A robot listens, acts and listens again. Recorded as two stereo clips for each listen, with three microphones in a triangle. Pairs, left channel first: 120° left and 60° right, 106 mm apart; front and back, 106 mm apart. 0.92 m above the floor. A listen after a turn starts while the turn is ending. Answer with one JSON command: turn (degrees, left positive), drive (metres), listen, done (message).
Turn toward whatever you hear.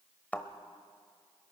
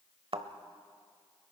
{"turn": -170}
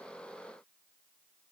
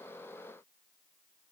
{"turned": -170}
{"done": "Facing where the thud came from. I can't hear it now."}